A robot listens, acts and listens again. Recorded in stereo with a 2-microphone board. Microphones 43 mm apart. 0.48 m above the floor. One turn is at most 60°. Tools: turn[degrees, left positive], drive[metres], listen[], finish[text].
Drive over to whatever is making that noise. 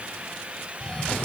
Thought: The cough: about 15° left or 165° left.
Action: turn[15]
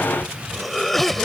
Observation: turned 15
Action: drive[1.0]
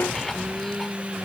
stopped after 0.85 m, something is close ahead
Thought: The cough is now 10° left.
Action: turn[10]
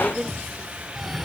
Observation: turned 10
Action: finish[I am next to the cough.]